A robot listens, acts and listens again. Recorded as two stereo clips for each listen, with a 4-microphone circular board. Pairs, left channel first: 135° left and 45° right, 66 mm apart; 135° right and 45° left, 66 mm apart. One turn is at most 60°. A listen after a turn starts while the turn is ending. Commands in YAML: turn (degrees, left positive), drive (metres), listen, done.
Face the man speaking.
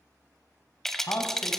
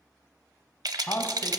turn: 60
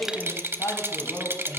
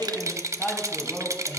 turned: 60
turn: 60
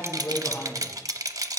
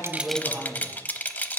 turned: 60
turn: 60
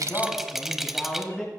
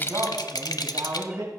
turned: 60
turn: 55
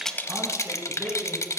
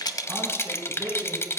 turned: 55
turn: 10
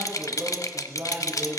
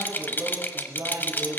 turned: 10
done: "Facing the man speaking, 2 to 4 m away."